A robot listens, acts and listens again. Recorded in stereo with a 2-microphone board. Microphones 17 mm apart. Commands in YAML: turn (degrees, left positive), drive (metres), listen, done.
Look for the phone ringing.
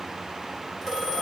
turn: -40
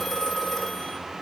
done: "Found it: a phone ringing, straight ahead, over 4 m away."